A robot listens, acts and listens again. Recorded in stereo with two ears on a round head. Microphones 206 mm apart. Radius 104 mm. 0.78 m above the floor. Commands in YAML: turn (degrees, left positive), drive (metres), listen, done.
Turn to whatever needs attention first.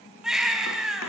turn: -30
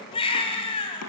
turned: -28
turn: 25
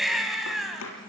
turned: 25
done: "Found it: a baby crying, straight ahead."